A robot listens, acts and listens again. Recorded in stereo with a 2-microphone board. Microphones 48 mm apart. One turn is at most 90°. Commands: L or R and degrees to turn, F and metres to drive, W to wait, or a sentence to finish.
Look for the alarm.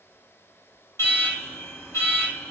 L65
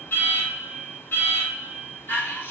L50
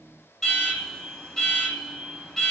L10
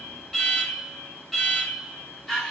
Facing the alarm, 1 to 2 m away.